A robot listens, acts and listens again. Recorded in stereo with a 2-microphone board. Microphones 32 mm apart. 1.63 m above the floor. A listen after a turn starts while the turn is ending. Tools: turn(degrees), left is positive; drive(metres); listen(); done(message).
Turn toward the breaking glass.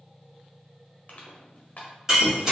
turn(degrees=-15)
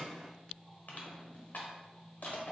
listen()
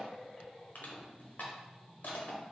done("I heard breaking glass, but can't make it out now. It was about straight ahead or 150° right.")